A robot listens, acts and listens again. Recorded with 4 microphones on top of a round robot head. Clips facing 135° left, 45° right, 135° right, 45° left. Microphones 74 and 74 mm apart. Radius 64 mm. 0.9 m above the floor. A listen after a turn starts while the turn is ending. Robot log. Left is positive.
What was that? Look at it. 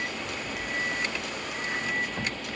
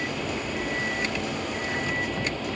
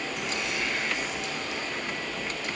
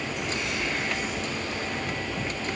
cmd idle
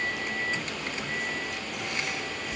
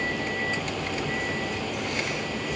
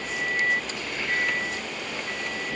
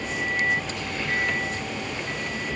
cmd idle
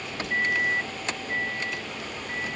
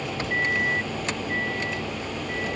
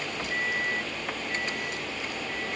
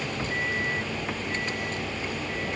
end: I can't make out anything to turn to.